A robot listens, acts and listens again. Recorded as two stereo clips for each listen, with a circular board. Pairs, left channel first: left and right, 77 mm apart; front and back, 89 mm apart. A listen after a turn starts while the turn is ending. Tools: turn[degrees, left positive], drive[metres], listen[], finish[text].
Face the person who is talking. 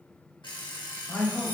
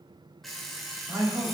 Thought: The man speaking: 140° left.
Action: turn[140]
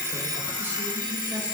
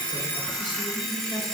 Action: listen[]
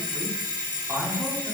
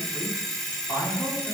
Thought: The man speaking is now 35° right.
Action: turn[-35]
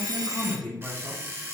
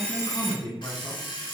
Thought: The man speaking is now 20° left.
Action: turn[20]
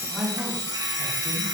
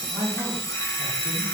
Action: finish[Found it: a man speaking, straight ahead.]